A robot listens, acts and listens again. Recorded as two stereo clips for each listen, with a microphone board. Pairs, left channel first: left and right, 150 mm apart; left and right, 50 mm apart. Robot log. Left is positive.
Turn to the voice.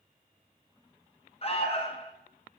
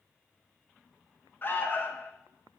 cmd idle
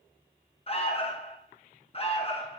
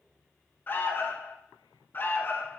cmd idle
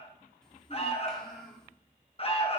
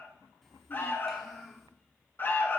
cmd yaw +30
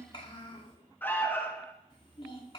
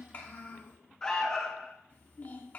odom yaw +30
note: So it is at 145° left.
cmd yaw +145
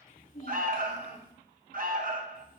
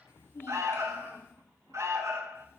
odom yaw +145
note: The child speaking is now 60° left.
cmd yaw +60
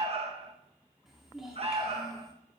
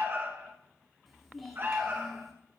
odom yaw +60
end: Facing the child speaking.